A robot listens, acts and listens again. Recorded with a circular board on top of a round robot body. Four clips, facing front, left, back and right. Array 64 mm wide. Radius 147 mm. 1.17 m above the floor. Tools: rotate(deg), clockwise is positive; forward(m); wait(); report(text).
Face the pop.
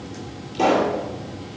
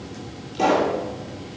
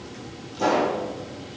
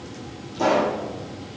rotate(-30)
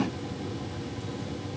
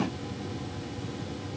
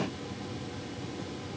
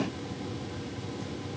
report("I heard a pop from this way, but can't make it out now.")